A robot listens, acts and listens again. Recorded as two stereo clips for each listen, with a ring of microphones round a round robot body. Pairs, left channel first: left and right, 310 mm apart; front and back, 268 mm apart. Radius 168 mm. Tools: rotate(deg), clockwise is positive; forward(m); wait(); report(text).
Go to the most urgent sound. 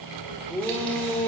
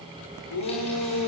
forward(1.0)
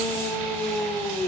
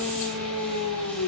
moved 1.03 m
forward(1.0)
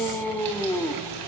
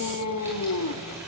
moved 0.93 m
forward(1.0)
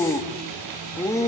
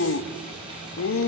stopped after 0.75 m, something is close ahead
rotate(-10)
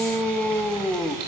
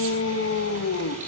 report("Arrived at the shout, straight ahead.")